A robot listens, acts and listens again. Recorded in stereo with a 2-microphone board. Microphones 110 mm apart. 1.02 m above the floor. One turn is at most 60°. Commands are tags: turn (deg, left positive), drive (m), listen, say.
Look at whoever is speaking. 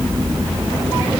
<listen/>
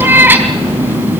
<listen/>
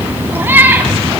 <say>I can't make out anyone speaking, only a cat meowing.</say>